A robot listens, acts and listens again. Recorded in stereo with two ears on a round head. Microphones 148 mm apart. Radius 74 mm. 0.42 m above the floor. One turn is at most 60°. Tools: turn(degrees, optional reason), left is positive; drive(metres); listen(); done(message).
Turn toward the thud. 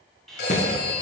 turn(degrees=50, reason="The thud: about 50° left or 130° left.")
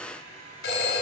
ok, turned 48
listen()
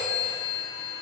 done("I heard a thud, but can't make it out now. It was about straight ahead or 85° left.")